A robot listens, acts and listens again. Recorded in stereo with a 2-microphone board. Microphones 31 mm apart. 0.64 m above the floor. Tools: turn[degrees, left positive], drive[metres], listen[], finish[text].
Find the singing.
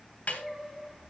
Action: turn[-30]
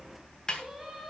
Action: listen[]
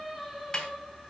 Action: turn[30]
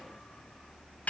Action: listen[]
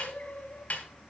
Thought: So it is at 125° left.
Action: turn[125]
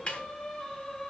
Thought: The singing is now 20° left.
Action: turn[20]
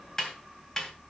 Action: listen[]
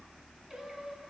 Action: listen[]
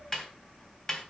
Action: finish[I heard singing from this way, but can't make it out now.]